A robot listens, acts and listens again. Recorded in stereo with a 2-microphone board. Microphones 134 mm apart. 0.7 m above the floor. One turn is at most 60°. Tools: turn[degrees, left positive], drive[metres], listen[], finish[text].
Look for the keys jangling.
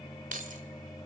Action: turn[-60]
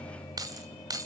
Thought: So it is at 30° right.
Action: turn[-30]
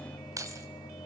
Thought: The keys jangling is now 25° right.
Action: turn[-25]
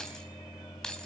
Action: finish[Found it: keys jangling, straight ahead, 2 to 4 m away.]